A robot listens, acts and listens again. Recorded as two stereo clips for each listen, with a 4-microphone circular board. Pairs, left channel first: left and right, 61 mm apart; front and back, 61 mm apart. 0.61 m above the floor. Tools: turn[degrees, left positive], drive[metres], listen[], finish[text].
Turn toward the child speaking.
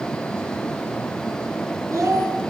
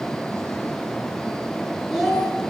Thought: The child speaking: 95° right.
Action: turn[-95]
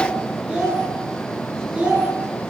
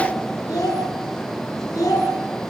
Thought: The child speaking is now 20° right.
Action: turn[-20]
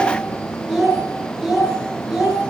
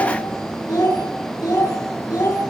Thought: The child speaking is now 10° right.
Action: turn[-10]
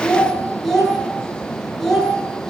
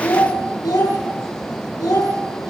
Action: finish[Found it: a child speaking, straight ahead, over 4 m away.]